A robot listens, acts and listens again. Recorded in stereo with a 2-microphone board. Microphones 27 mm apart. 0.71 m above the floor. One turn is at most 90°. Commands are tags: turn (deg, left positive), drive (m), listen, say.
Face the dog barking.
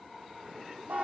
<listen/>
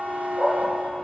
<turn deg="30"/>
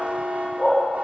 <turn deg="90"/>
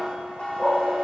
<turn deg="35"/>
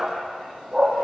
<say>Facing the dog barking, over 4 m away.</say>